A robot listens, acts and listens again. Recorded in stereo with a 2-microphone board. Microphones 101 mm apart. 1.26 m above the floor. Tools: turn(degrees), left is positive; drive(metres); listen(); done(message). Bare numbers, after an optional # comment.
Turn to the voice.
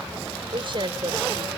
# The woman speaking: about 55° right or 125° right.
turn(-55)
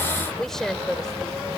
done("Facing the woman speaking.")